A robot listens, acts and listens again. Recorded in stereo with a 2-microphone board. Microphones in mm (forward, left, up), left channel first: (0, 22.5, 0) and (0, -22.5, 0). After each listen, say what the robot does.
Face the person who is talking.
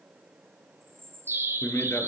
Turn 90° left.
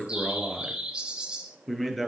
Facing the man speaking, over 4 m away.